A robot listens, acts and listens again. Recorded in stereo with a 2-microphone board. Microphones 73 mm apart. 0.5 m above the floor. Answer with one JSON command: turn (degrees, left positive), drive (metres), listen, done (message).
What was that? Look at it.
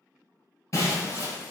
{"turn": 45}
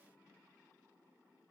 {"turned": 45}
{"listen": true}
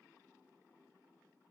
{"done": "I heard breaking glass, but can't make it out now. It was about straight ahead or 90° left."}